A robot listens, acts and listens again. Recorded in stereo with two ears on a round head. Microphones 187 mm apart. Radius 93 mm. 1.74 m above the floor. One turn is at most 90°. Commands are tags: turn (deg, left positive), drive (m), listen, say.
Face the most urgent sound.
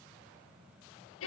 <listen/>
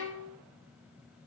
<listen/>
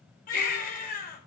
<turn deg="45"/>
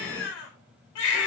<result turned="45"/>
<turn deg="85"/>
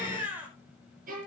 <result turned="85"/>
<turn deg="-10"/>
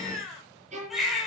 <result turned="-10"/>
<say>Found it: a baby crying, straight ahead.</say>